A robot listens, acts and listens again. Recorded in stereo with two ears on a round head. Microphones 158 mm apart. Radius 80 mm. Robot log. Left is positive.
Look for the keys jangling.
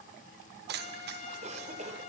note: The keys jangling: about 65° right or 115° right.
cmd yaw -65
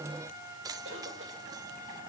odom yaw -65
note: So it is at 25° right.
cmd yaw -25
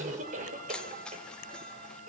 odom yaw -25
end: Found it: keys jangling, straight ahead.